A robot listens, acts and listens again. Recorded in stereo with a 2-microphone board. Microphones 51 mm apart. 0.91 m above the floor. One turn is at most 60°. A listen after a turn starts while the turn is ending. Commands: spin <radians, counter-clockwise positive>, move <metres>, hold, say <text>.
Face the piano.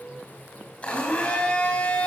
hold
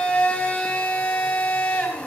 hold
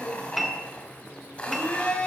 spin 0.52
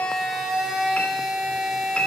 hold
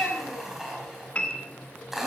spin 1.05
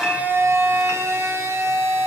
spin 1.05
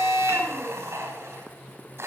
spin 0.61
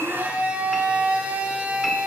say I heard a piano from this way, but can't make it out now.